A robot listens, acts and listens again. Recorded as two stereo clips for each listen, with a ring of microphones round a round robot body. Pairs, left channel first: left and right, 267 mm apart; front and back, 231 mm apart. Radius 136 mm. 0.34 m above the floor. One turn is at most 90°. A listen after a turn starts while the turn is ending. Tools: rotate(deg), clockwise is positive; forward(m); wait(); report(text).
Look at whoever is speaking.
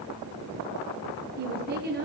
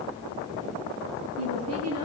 rotate(90)
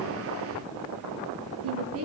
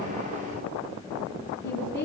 rotate(55)
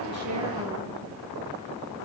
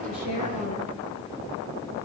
wait()
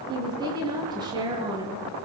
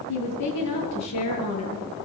rotate(15)
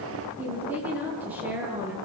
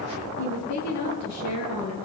report("Found it: a woman speaking, straight ahead.")